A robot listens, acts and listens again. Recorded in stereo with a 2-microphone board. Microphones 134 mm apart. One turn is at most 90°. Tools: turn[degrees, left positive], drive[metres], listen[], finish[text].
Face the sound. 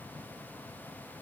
Action: listen[]
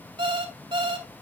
Thought: The alarm clock: about 40° right or 140° right.
Action: turn[-40]
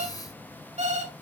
Thought: So it is at 95° right.
Action: turn[-90]
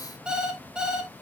Action: finish[Facing the alarm clock, 1 to 2 m away.]